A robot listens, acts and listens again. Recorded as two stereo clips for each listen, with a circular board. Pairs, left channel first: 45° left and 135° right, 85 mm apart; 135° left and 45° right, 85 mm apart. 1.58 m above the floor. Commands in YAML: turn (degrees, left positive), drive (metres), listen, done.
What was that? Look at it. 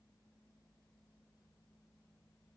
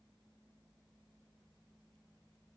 listen: true
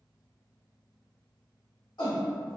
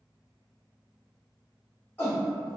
turn: 75
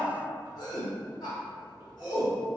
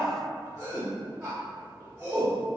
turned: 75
done: "Found it: a shout, straight ahead, 1 to 2 m away."